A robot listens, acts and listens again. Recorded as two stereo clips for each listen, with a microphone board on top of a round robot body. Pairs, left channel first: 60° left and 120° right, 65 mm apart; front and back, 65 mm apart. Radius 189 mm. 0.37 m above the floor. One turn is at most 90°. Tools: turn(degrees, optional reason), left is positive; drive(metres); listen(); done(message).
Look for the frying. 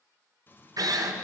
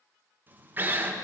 turn(degrees=90, reason="The frying: 120° left.")
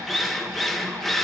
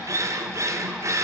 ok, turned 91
turn(degrees=30, reason="Nothing new. It was at 30° left.")
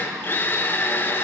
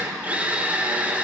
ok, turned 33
listen()
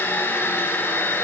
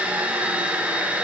done("I heard frying from this way, but can't make it out now.")